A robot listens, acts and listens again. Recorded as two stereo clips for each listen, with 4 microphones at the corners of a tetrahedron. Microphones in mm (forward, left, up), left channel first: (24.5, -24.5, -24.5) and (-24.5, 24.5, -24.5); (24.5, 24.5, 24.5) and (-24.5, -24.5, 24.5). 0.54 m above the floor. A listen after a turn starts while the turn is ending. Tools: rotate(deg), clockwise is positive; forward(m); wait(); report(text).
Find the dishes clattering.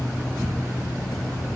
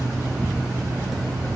wait()
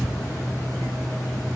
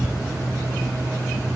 wait()
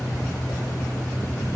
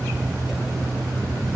report("I can't make out dishes clattering to turn to.")